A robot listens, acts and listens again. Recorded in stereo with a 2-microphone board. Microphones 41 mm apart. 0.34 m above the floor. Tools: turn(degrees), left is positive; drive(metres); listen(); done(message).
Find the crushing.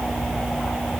listen()
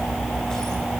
listen()
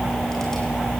done("I can't make out crushing to turn to.")